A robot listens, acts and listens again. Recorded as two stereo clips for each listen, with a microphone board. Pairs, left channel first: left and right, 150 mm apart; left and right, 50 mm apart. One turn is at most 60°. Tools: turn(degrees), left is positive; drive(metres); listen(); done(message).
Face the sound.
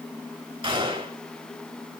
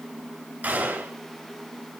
turn(degrees=-40)
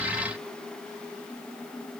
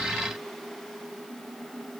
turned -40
listen()
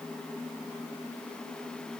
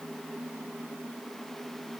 done("I heard a gunshot, but can't make it out now. It was about straight ahead or 100° right.")